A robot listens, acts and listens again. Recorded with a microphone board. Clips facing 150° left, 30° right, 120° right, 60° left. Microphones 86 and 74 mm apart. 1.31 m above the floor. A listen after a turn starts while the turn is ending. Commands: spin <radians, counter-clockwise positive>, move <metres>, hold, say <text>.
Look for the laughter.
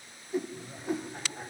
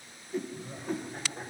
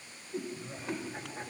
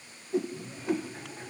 spin -1.05
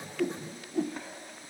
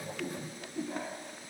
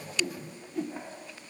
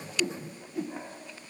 say Facing the laughter.